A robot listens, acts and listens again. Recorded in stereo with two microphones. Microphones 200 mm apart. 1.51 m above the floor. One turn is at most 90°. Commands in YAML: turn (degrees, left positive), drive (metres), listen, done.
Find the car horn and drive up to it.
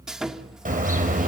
turn: -40
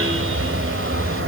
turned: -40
turn: -90
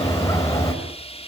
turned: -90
turn: 15
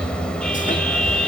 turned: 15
drive: 1.0
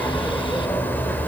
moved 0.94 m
turn: 10
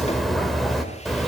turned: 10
drive: 1.0
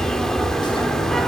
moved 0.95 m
drive: 1.0
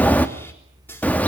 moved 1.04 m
turn: 10
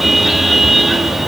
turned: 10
drive: 1.0
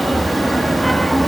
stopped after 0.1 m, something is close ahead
done: "Arrived at the car horn, straight ahead."